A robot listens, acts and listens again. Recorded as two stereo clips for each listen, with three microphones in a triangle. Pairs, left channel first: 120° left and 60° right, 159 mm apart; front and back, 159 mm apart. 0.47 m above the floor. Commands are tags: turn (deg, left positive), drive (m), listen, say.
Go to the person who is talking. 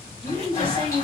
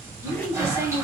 <turn deg="-110"/>
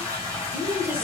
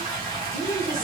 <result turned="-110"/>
<turn deg="15"/>
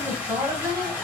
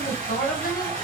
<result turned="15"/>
<drive m="1.0"/>
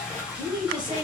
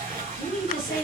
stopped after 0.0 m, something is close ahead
<say>Something is in my way. I am facing the woman speaking but have not reached it.</say>